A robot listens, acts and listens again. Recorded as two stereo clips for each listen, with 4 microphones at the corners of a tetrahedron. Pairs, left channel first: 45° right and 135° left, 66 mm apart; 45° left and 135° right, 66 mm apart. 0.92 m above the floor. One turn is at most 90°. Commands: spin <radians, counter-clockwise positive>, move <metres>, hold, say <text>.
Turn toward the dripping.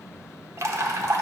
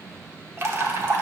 spin 1.57
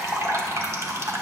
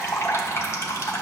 spin 1.57
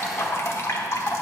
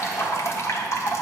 say Facing the dripping.